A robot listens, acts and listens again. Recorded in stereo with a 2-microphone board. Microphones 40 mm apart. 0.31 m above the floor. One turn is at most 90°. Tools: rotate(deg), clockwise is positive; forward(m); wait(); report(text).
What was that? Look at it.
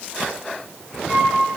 rotate(45)
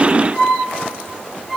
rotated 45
report("Facing the flute, 2 to 4 m away.")